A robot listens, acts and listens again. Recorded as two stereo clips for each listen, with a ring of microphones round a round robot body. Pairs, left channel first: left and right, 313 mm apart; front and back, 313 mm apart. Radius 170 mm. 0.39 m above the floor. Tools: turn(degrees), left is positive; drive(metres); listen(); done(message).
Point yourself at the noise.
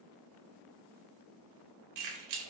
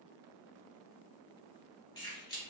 turn(degrees=-75)
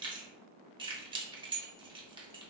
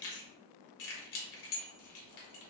turn(degrees=-15)
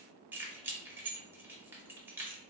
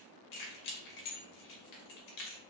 turn(degrees=-10)
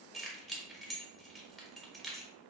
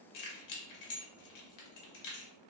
done("Found it: keys jangling, straight ahead, under 1 m away.")